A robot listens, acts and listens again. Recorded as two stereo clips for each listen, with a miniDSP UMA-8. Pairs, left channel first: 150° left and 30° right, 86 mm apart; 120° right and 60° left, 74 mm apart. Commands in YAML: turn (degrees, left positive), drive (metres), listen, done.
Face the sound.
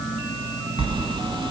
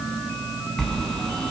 turn: -40
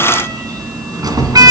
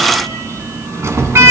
turn: 10
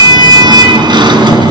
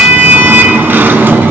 done: "Facing the sliding door, 2 to 4 m away."